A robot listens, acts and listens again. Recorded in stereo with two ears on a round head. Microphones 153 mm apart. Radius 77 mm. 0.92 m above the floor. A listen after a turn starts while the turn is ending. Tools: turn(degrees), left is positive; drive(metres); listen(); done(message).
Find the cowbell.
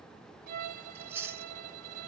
listen()
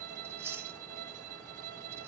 listen()
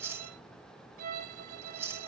done("I can't make out a cowbell to turn to.")